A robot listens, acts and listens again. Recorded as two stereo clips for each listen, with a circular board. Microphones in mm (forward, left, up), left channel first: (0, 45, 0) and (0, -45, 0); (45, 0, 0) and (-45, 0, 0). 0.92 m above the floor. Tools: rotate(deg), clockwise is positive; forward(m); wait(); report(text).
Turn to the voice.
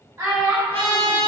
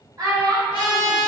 rotate(145)
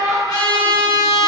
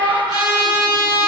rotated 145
rotate(30)
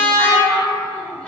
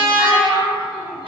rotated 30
report("Found it: a child speaking, straight ahead.")